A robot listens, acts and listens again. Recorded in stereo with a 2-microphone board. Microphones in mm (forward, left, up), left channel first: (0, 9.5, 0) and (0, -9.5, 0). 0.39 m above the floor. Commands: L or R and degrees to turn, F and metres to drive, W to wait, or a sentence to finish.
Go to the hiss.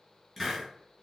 L30
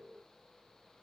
W
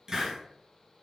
R30
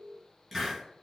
F1.0
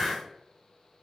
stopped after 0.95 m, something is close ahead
L10
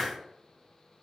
Arrived at the hiss, straight ahead.